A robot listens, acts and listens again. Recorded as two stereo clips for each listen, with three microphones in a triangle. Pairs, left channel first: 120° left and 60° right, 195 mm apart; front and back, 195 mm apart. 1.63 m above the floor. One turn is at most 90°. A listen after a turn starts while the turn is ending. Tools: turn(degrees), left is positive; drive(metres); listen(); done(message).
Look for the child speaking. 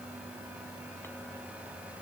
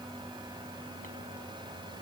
listen()
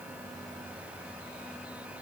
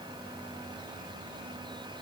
listen()
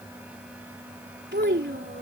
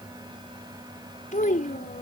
turn(degrees=-45)
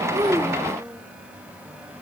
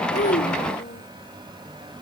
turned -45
listen()
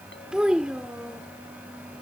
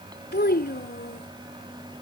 turn(degrees=25)
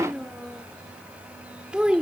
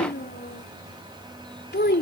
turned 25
turn(degrees=25)
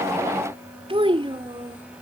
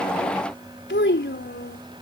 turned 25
done("Facing the child speaking.")